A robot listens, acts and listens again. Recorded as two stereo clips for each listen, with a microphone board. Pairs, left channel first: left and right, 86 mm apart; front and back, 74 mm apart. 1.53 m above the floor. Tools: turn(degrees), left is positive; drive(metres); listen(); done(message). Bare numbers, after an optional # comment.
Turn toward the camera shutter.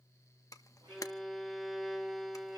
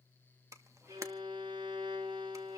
# The camera shutter: 135° left.
turn(135)
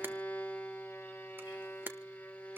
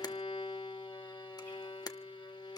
# The camera shutter is now 25° right.
turn(-25)
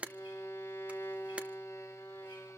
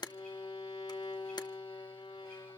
# The camera shutter is now 15° right.
turn(-15)
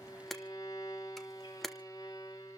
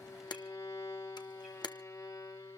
done("Found it: a camera shutter, straight ahead.")